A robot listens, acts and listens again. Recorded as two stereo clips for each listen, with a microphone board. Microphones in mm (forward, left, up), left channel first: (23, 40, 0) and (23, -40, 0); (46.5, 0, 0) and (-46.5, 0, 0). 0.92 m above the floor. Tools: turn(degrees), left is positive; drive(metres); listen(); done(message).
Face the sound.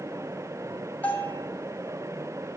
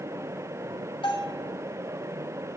turn(degrees=20)
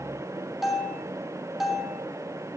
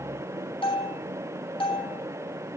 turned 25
done("Found it: a bell, straight ahead, 2 to 4 m away.")